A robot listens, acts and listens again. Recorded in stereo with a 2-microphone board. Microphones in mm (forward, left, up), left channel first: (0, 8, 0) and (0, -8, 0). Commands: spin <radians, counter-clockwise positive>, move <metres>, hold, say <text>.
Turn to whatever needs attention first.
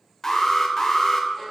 spin 0.52
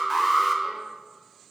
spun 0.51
say Facing the alarm, under 1 m away.